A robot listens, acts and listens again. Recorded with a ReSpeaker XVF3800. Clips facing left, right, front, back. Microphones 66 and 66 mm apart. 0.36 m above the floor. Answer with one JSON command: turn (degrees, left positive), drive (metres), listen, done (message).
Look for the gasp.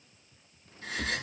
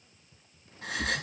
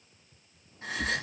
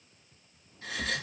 {"turn": -60}
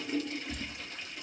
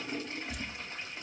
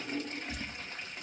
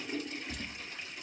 {"done": "Facing where the gasp came from. I can't hear it now."}